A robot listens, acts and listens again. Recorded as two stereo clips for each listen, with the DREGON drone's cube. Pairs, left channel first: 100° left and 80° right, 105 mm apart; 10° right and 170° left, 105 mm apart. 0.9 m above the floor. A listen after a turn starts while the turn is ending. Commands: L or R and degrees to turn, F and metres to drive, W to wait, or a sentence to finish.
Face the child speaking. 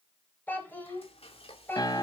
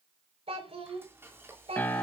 L170
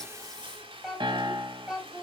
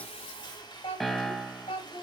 Found it: a child speaking, straight ahead, over 4 m away.